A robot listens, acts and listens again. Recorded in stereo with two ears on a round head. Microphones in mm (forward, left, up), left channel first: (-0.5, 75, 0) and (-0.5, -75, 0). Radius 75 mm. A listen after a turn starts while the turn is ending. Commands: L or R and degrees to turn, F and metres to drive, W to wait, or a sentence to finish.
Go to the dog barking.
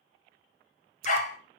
L50
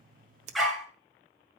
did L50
F1.0
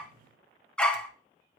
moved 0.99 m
F1.0
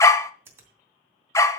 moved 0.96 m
L20
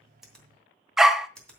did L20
F1.0
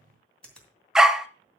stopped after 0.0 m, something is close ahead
I am next to the dog barking.